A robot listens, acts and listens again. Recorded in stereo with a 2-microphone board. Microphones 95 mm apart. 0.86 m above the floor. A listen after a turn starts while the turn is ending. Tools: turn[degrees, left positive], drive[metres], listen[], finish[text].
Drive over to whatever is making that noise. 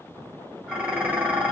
Thought: The dishes clattering: about 20° right or 160° right.
Action: turn[-20]
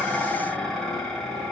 Action: drive[1.0]
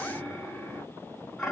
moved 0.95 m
Action: drive[1.0]
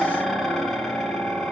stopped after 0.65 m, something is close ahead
Action: finish[Arrived at the dishes clattering, straight ahead.]